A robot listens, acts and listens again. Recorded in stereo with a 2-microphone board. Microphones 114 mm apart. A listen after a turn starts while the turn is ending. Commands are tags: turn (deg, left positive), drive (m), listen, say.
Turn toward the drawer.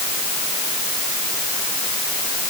<listen/>
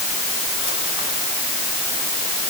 <listen/>
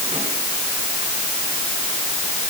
<say>I can't make out a drawer to turn to.</say>